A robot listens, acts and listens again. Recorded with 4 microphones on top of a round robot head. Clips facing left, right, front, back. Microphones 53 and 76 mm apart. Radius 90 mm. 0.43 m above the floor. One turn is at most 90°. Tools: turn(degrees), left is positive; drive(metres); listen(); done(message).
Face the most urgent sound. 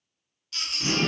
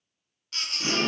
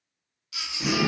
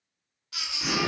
turn(degrees=-90)
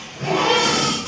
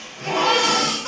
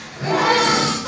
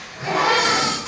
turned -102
turn(degrees=-35)
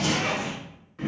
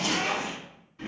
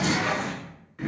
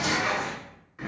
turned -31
listen()
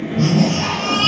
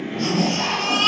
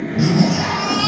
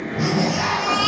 done("Facing the baby crying, under 1 m away.")